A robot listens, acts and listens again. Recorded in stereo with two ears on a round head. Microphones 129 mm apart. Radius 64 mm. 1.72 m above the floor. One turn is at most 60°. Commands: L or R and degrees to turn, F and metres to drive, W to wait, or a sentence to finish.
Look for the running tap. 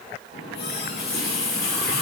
L60
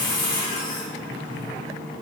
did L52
L35
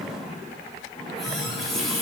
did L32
Found it: a running tap, straight ahead, 2 to 4 m away.